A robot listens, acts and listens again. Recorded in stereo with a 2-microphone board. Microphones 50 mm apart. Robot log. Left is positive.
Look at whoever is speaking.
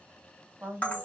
note: The woman speaking: about 35° right or 145° right.
cmd yaw -35
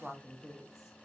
end: Found it: a woman speaking, straight ahead.